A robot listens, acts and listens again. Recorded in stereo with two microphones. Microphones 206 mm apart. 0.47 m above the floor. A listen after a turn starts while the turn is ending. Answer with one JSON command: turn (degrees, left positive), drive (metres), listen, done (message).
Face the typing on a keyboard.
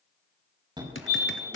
{"turn": 70}
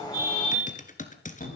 {"turn": 40}
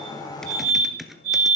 {"done": "Facing the typing on a keyboard."}